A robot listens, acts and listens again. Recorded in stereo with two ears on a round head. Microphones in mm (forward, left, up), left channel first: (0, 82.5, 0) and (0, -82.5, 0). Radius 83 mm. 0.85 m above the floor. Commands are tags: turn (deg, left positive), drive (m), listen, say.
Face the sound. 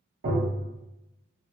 <turn deg="-65"/>
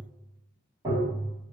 <turn deg="-25"/>
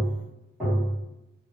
<say>Found it: tapping, straight ahead, 1 to 2 m away.</say>